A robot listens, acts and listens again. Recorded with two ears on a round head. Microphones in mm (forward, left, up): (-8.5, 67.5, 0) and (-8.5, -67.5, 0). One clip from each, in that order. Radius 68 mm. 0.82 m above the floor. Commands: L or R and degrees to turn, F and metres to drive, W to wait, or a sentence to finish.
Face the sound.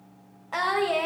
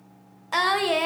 R65
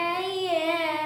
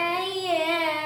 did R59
Facing the singing.